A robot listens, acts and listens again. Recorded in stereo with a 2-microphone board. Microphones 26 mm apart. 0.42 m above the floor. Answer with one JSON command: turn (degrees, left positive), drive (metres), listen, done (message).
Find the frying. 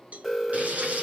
{"turn": -60}
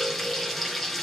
{"done": "Found it: frying, straight ahead."}